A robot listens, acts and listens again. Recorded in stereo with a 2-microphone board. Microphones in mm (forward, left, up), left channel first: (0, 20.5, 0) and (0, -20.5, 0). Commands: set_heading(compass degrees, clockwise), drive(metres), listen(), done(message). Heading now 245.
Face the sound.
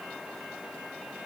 listen()
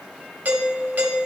set_heading(295)
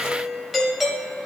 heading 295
done("Facing the doorbell, 1 to 2 m away.")